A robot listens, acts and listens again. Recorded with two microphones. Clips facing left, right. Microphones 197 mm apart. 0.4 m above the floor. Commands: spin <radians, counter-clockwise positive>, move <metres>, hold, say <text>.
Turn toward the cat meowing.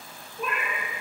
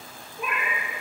spin -0.52
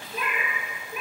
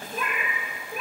spin -2.36
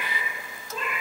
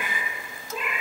spin -0.17
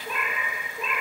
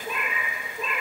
say Found it: a cat meowing, straight ahead, 2 to 4 m away.